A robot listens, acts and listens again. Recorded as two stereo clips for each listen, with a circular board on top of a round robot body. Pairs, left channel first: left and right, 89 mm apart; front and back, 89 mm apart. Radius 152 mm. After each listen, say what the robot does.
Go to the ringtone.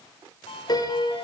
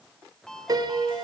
Turn 85° left.
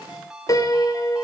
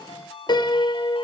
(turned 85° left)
Turn 10° right.
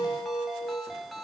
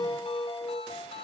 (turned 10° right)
Drive 1.0 m forward.
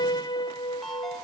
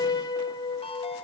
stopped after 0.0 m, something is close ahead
Blocked. The ringtone is further on, straight ahead.